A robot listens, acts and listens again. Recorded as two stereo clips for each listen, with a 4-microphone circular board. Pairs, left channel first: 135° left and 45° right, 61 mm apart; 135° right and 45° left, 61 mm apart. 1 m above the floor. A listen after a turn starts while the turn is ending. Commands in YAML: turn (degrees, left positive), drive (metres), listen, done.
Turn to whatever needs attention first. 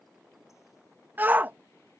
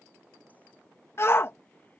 turn: -100
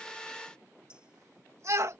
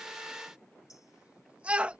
turn: -20
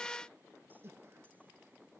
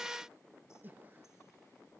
listen: true
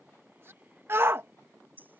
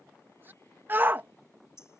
done: "Found it: a shout, straight ahead."